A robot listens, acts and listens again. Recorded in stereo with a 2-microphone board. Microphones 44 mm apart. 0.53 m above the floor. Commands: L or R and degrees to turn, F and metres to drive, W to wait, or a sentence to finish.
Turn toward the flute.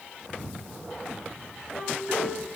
R30
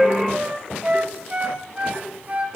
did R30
R145
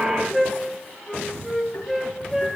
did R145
Facing the flute.